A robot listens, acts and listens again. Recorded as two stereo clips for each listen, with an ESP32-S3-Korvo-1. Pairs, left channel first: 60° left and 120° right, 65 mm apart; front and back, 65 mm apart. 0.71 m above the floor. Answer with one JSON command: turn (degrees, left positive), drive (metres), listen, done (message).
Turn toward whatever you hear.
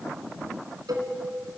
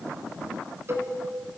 {"turn": -130}
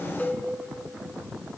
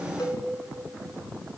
{"done": "Facing the cowbell, 2 to 4 m away."}